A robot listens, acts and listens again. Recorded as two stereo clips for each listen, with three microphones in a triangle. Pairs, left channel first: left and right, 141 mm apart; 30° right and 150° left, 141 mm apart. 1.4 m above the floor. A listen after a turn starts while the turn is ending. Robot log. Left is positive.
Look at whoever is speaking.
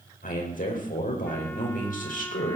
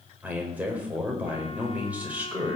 note: The man speaking: 70° left.
cmd yaw +70
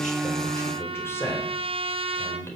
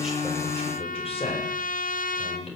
note: The man speaking is now 15° left.
cmd yaw +15
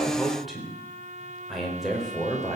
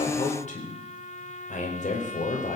end: Facing the man speaking, over 4 m away.